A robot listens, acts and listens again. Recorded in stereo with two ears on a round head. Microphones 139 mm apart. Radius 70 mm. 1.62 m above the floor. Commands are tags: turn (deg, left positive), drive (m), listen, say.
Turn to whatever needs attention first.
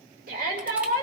<turn deg="-65"/>
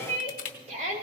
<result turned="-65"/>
<turn deg="-45"/>
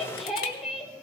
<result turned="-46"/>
<say>Facing the shout.</say>